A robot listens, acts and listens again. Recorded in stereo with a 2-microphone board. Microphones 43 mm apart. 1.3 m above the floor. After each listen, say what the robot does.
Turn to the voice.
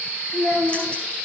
Turn 70° left.
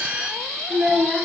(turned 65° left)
Found it: a child speaking, straight ahead.